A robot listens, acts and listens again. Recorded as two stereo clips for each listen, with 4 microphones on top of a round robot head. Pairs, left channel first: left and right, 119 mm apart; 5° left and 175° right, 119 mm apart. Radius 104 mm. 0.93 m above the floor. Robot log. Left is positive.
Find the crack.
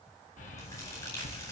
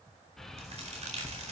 note: The crack: 155° left.
cmd yaw +155
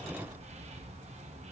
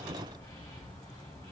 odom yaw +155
end: I heard a crack from this way, but can't make it out now.